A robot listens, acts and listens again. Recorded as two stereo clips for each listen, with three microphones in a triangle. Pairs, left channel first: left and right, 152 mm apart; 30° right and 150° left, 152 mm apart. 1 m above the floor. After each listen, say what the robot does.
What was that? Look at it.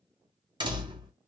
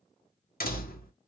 Turn 30° right.
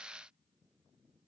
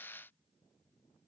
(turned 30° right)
I heard a door slam from this way, but can't make it out now.